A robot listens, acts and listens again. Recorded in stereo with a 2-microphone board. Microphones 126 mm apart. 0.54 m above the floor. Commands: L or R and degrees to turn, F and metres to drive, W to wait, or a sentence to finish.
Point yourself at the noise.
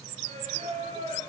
R75
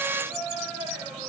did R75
Facing the singing.